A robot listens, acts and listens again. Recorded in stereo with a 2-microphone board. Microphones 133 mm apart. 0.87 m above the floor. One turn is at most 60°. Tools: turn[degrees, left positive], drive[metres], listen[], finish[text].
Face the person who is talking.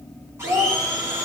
Action: turn[-60]
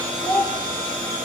Thought: So it is at 20° right.
Action: turn[-20]
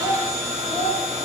Thought: The child speaking is now 10° left.
Action: turn[10]
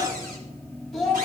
Action: finish[Found it: a child speaking, straight ahead.]